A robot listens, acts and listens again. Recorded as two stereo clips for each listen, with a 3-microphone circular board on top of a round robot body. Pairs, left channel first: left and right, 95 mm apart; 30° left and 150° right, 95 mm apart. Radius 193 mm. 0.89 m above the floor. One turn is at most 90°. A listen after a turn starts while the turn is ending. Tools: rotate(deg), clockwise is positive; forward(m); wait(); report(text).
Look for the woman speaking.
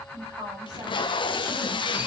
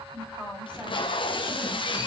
rotate(50)
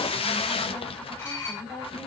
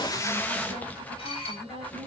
report("Facing the woman speaking, over 4 m away.")